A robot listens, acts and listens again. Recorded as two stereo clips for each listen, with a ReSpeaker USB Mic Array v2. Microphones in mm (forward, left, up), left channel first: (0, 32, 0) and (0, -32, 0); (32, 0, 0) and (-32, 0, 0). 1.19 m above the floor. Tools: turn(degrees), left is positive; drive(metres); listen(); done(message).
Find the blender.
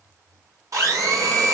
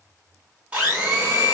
turn(degrees=-115)
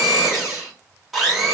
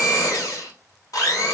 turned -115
done("Found it: a blender, straight ahead.")